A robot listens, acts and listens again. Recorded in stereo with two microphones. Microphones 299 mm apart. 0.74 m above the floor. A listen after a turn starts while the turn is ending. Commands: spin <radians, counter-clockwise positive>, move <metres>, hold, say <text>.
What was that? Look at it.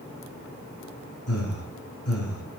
spin 0.96
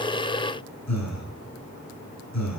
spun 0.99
spin 1.22
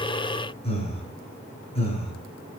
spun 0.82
spin 0.35
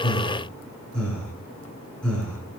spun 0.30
say Found it: breathing, straight ahead, over 4 m away.